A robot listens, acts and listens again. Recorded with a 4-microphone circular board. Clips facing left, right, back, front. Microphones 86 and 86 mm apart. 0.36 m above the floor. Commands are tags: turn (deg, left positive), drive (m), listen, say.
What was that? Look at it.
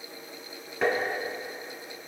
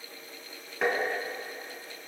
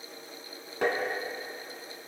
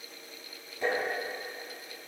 <turn deg="180"/>
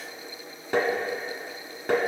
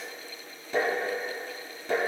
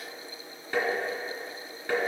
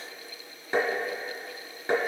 <turn deg="70"/>
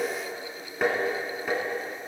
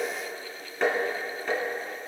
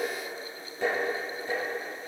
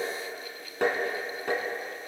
<say>Facing the tapping, 2 to 4 m away.</say>